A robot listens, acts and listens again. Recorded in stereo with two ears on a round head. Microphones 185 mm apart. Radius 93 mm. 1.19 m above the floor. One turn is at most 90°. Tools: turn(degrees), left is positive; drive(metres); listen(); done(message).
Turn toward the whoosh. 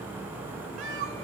listen()
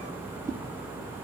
turn(degrees=-15)
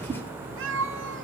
turn(degrees=-90)
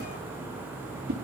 turn(degrees=-45)
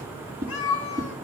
turn(degrees=-15)
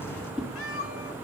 done("Facing the whoosh, 2 to 4 m away.")